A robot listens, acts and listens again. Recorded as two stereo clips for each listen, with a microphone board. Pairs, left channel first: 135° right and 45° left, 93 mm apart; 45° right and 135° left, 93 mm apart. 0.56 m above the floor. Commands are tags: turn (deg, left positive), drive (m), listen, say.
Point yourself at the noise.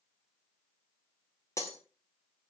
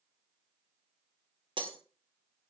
<turn deg="165"/>
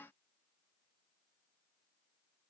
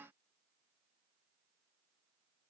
<say>I heard breaking glass from this way, but can't make it out now.</say>